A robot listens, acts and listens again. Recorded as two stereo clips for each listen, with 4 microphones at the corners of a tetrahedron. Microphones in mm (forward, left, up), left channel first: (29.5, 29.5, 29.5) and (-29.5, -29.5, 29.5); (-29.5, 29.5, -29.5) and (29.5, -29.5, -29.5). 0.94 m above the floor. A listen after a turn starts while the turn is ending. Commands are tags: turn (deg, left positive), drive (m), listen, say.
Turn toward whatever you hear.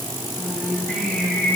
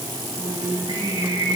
<turn deg="-50"/>
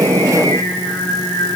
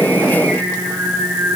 <say>Found it: singing, straight ahead, over 4 m away.</say>